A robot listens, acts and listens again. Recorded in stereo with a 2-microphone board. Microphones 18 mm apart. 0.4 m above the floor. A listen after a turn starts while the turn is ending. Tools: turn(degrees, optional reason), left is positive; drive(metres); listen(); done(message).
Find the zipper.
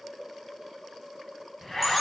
turn(degrees=25, reason="The zipper: about 25° left or 155° left.")
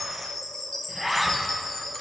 done("Facing the zipper.")